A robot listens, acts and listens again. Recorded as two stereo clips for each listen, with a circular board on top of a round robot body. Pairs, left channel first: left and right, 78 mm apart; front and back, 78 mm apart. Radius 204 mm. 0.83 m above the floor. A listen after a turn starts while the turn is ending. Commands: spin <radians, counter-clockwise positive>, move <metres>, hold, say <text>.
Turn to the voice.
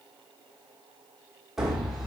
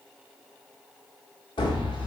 hold
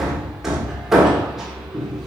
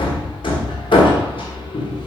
hold
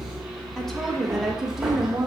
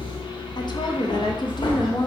spin -0.17
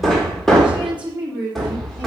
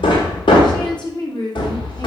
spin -0.26
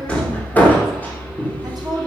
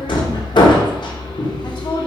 say Found it: a woman speaking, straight ahead, 2 to 4 m away.